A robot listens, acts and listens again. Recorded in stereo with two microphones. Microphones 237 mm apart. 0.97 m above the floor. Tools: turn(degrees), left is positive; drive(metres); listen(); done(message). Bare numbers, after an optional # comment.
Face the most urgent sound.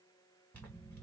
listen()
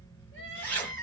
# The crying: about 55° left or 125° left.
turn(55)
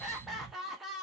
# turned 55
done("Facing the crying.")